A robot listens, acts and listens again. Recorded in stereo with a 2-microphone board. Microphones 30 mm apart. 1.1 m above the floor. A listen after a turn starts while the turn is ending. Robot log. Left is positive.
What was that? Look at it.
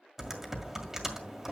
cmd yaw -30
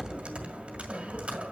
note: So it is at 140° right.
cmd yaw -140
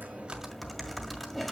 end: Facing the typing on a keyboard.